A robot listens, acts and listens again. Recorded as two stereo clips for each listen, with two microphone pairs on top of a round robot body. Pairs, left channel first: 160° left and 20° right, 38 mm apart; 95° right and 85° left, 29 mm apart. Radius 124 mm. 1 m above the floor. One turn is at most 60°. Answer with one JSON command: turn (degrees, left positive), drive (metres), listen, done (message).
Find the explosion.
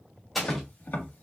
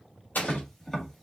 {"turn": -60}
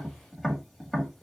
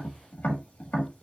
{"turn": -50}
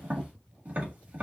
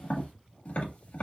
{"done": "I heard an explosion from this way, but can't make it out now."}